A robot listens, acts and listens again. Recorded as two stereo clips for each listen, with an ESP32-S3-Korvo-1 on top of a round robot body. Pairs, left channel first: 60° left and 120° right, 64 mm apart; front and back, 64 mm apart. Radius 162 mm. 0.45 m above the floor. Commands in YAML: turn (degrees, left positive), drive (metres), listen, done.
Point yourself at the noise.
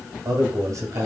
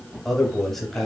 turn: -85
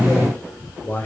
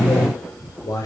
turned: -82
done: "Facing the man speaking, 2 to 4 m away."